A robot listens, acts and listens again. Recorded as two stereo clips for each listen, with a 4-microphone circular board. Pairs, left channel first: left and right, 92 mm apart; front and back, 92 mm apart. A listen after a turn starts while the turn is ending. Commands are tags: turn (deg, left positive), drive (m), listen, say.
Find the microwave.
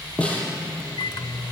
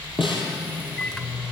<turn deg="80"/>
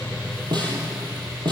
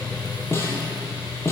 <listen/>
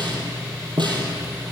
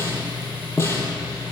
<listen/>
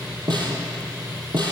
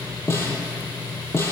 <say>I heard a microwave from this way, but can't make it out now.</say>